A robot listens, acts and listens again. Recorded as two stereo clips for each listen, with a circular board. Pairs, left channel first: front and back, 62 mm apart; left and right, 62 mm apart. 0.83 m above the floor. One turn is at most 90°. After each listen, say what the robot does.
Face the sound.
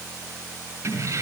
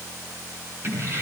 Turn 90° right.
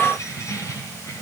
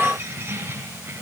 Turn 35° right.
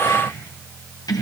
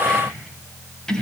Turn 15° left.
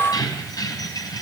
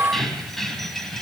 Facing the keys jangling.